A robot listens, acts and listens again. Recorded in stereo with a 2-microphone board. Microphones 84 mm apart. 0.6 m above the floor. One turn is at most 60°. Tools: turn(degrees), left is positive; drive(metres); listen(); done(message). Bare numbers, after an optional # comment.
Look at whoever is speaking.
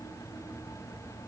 listen()
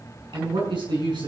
# The man speaking: about 70° right or 110° right.
turn(-60)
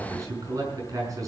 # So it is at 45° right.
turn(-45)
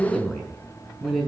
done("Found it: a man speaking, straight ahead.")